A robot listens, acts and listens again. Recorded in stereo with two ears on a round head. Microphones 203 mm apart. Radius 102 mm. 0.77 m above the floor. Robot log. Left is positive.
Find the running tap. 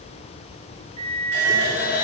note: The running tap: about 55° left or 125° left.
cmd yaw +55
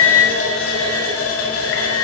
note: So it is at 70° left.
cmd yaw +70
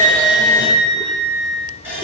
note: The running tap is now 10° right.
cmd yaw -10
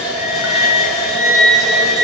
end: Found it: a running tap, straight ahead.